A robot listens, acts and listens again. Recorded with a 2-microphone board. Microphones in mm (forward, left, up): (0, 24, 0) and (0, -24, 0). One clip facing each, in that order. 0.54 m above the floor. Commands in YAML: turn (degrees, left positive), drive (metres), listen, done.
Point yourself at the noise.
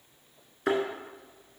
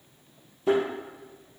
turn: 90
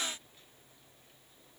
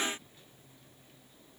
done: "I heard a thud from this way, but can't make it out now."